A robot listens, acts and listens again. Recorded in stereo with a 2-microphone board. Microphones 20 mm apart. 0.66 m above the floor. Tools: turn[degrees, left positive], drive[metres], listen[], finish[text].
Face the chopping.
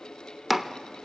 Action: turn[-30]
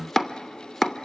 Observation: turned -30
Thought: So it is at 20° left.
Action: turn[20]
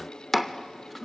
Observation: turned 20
Action: finish[Facing the chopping.]